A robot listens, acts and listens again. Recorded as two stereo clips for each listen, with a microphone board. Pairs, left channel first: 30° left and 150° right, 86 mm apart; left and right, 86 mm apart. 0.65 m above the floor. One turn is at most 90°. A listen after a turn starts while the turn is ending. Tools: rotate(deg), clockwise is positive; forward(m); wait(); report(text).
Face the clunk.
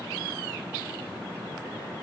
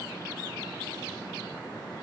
wait()
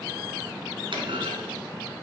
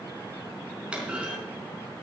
rotate(90)
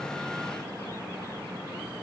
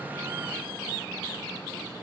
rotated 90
rotate(75)
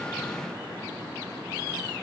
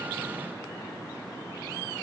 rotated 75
report("I heard a clunk from this way, but can't make it out now.")